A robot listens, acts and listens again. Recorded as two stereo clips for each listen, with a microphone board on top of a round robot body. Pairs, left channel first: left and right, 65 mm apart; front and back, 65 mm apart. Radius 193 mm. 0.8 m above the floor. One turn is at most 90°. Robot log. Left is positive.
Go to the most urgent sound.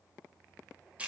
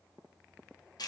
cmd idle
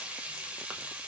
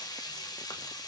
cmd idle
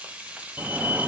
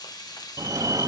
note: The fire alarm: 155° right.
cmd yaw -90
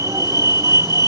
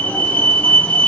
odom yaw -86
note: The fire alarm is now 65° right.
cmd yaw -65
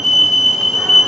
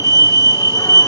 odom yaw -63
cmd fwd 1.0
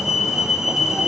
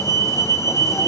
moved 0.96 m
cmd fwd 1.0
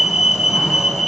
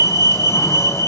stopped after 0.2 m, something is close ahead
end: Arrived at the fire alarm, straight ahead.